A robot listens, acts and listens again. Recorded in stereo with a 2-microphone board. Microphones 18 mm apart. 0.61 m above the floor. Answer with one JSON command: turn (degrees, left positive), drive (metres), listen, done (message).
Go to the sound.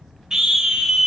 {"turn": -40}
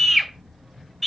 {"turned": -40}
{"drive": 1.0}
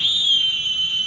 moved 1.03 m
{"drive": 1.0}
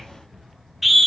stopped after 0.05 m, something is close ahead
{"turn": -10}
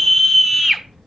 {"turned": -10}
{"done": "Arrived at the scream, straight ahead."}